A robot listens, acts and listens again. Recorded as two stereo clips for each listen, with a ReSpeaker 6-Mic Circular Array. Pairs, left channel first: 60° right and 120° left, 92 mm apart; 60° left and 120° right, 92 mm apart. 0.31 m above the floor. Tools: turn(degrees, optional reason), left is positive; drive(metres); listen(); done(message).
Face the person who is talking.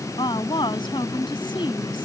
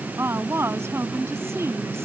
turn(degrees=-65, reason="The woman speaking: 65° right.")
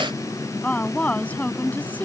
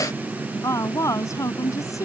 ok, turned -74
turn(degrees=10, reason="The woman speaking is now 10° left.")
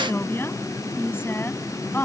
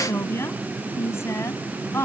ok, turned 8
done("Facing the woman speaking.")